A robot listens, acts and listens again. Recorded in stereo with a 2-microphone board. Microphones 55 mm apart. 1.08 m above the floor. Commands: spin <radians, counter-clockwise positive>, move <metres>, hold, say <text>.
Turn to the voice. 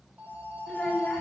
spin 0.26
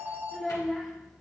say Facing the child speaking.